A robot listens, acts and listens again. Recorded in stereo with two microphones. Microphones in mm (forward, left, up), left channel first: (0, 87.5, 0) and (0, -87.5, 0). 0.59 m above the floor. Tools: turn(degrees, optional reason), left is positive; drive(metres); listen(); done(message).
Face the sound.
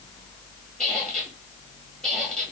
turn(degrees=30)
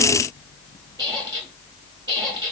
turn(degrees=-25, reason="So it is at 25° right.")
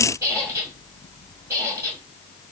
turn(degrees=-15, reason="The squeak is now 15° right.")
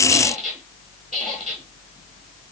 done("Facing the squeak.")